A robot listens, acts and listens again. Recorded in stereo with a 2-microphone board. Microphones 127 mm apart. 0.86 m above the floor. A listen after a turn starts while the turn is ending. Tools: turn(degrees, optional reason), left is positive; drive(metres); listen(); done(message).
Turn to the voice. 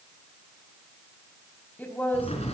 turn(degrees=30)
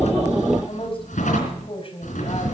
turn(degrees=135, reason="So it is at 135° left.")
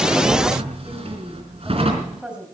turn(degrees=-10, reason="The woman speaking is now 10° right.")
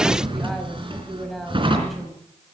done("Facing the woman speaking, over 4 m away.")